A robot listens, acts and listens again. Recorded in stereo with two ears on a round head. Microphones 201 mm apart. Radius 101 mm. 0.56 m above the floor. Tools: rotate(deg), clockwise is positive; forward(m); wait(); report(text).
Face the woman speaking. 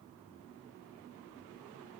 wait()
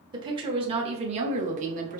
rotate(35)
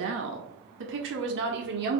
rotate(45)
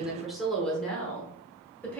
report("Found it: a woman speaking, straight ahead.")